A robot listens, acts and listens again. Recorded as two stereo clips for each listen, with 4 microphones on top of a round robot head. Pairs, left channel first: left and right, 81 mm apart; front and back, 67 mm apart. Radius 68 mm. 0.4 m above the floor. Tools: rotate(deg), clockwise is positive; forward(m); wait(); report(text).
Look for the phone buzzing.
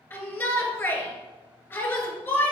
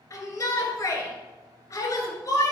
wait()
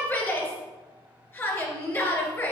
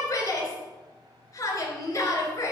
wait()
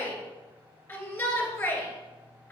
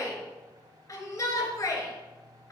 report("I can't make out a phone buzzing to turn to.")